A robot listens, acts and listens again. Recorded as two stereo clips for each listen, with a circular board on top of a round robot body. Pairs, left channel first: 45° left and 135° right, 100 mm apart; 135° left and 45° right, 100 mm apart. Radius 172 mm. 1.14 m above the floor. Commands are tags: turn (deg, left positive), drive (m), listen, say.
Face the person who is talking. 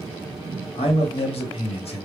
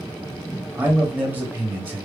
<turn deg="30"/>
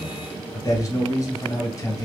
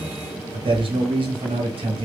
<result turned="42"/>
<turn deg="-15"/>
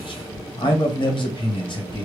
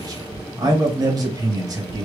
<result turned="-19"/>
<say>Found it: a man speaking, straight ahead.</say>